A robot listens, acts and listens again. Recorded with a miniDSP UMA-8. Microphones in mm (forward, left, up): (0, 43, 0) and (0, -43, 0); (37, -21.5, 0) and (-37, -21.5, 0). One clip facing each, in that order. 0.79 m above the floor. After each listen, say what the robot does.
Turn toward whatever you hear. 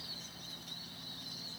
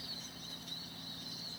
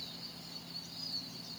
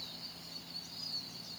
Keep listening.
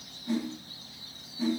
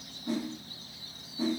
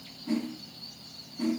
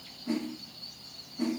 Turn 110° right.
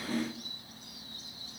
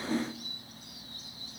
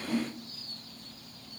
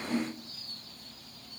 Turn 25° right.
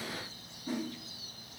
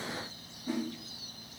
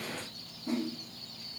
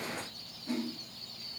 Found it: a whoosh, straight ahead, 1 to 2 m away.